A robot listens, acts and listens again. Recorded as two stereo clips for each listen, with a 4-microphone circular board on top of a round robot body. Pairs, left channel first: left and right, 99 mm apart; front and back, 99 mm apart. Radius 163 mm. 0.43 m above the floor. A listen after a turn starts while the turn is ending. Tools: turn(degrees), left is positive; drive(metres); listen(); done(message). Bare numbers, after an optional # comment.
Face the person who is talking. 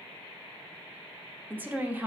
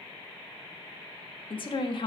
# The woman speaking: 20° right.
turn(-20)
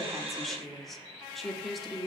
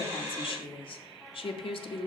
done("Found it: a woman speaking, straight ahead.")